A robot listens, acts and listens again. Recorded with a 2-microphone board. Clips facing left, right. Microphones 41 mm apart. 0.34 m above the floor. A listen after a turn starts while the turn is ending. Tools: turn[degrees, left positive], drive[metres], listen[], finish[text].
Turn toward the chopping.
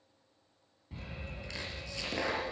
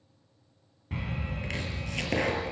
Thought: The chopping: about 50° right or 130° right.
Action: turn[-50]
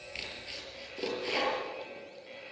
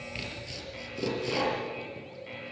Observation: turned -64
Thought: So it is at 15° left.
Action: turn[15]
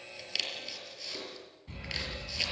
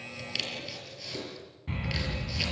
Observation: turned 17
Action: finish[Found it: chopping, straight ahead.]